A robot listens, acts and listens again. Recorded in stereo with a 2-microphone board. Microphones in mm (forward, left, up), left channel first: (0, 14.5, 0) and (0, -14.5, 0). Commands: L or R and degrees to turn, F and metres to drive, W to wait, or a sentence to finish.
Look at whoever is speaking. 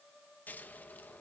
W
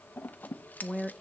R30
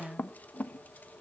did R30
L20
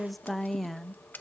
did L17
Facing the woman speaking, under 1 m away.